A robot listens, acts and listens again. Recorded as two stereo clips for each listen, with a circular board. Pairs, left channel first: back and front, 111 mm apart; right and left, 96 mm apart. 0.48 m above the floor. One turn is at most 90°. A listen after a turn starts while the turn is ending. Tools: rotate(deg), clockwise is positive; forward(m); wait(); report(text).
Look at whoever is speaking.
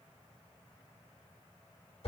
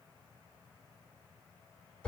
wait()
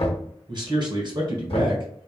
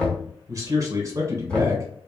rotate(-40)
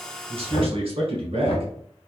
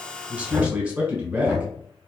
rotate(-15)
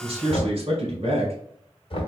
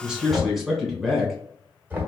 report("Facing the man speaking.")